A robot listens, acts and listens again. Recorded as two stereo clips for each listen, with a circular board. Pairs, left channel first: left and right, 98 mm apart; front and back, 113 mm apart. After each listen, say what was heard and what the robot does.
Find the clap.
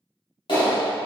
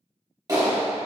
The clap: 125° left. Turn 125° left.
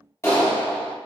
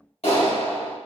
The clap is now 30° left. Turn 30° left.
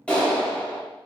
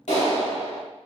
The clap is now 10° left. Turn 10° left.
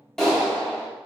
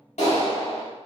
Facing the clap, 1 to 2 m away.